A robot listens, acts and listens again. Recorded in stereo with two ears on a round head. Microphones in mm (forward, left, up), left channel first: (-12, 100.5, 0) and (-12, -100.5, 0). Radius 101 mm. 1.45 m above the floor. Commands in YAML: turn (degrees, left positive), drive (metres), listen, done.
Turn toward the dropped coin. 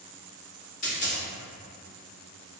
turn: 35
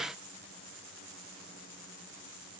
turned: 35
listen: true
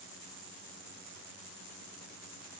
done: "I heard a dropped coin, but can't make it out now. It was about straight ahead or 110° left."